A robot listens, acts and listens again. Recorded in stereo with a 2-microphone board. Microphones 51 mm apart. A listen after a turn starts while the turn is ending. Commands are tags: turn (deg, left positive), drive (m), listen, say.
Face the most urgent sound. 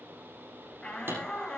<turn deg="20"/>
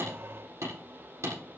<listen/>
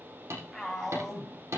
<say>Found it: a shout, straight ahead.</say>